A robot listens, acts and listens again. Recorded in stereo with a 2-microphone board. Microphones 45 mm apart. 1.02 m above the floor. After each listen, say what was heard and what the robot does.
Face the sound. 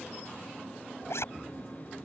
Turn 90° left.
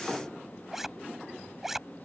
Facing the zipper.